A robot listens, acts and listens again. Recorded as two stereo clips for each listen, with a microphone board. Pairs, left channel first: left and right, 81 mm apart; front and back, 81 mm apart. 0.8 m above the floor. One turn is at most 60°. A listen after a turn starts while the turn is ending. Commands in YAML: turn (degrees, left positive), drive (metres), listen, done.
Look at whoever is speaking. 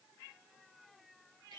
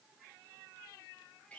listen: true
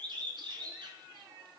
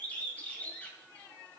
listen: true
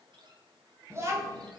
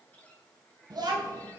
turn: -60
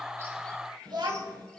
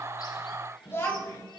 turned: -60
turn: -60
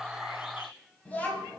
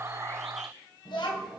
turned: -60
turn: 20
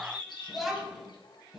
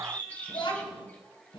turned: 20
done: "Facing the child speaking, 2 to 4 m away."